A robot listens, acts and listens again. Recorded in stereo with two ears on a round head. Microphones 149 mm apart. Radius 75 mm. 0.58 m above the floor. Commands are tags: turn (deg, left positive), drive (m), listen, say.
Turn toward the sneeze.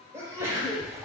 <turn deg="-15"/>
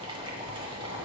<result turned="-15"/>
<listen/>
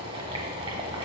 <say>I heard a sneeze, but can't make it out now. It was about straight ahead or 150° right.</say>